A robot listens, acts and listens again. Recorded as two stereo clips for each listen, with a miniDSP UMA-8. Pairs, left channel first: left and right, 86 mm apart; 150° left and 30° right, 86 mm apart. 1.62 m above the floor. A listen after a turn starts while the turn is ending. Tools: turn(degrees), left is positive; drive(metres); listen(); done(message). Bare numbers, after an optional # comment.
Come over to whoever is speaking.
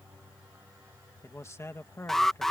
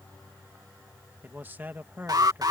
# The man speaking: 35° left.
turn(35)
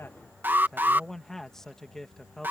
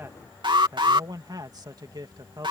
drive(1.0)
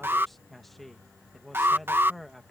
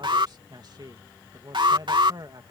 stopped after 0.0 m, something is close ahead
done("Something is in my way. I am facing the man speaking but have not reached it.")